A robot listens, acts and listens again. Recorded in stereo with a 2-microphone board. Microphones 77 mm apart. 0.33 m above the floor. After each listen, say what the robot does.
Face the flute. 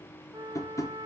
Turn 60° right.
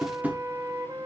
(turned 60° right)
Turn 55° right.
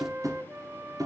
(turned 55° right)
Turn 30° right.
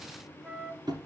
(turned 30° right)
Turn 15° right.
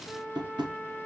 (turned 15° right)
Found it: a flute, straight ahead.